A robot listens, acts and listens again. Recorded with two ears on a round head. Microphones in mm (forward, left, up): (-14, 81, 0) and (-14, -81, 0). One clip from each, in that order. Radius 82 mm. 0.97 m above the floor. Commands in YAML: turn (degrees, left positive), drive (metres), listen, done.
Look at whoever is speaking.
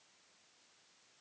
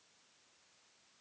listen: true
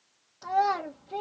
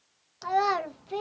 turn: -45
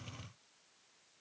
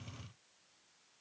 listen: true
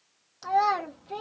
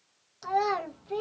done: "Found it: a child speaking, straight ahead, under 1 m away."